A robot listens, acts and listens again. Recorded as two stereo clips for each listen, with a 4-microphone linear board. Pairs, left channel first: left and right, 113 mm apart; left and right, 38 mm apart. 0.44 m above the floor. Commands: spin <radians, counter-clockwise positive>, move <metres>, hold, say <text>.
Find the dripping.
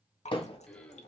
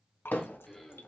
spin 1.57
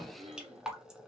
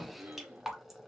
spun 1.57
say Found it: dripping, straight ahead.